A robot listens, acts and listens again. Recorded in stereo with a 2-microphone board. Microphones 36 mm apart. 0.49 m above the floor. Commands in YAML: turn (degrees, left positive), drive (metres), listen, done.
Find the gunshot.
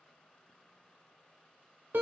listen: true
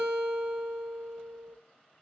listen: true
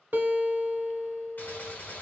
turn: 55
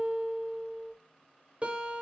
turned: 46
listen: true
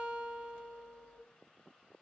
done: "I heard a gunshot, but can't make it out now. It was about 10° left or 80° left."